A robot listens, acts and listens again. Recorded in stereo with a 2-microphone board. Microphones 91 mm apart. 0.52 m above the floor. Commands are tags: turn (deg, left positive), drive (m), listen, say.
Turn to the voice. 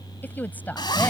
<turn deg="20"/>
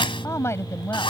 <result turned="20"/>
<turn deg="30"/>
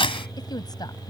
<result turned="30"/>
<turn deg="130"/>
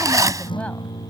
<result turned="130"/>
<listen/>
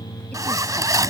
<listen/>
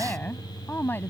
<turn deg="20"/>
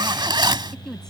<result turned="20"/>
<say>Found it: a woman speaking, straight ahead.</say>